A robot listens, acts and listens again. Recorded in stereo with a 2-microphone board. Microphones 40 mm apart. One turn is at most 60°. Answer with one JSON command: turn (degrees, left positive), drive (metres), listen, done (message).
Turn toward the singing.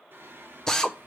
{"turn": -60}
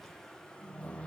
{"turn": 30}
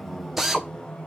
{"turn": 25}
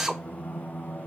{"turn": 50}
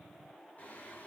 {"turn": 40}
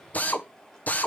{"listen": true}
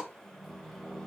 {"turn": 10}
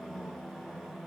{"done": "Found it: singing, straight ahead."}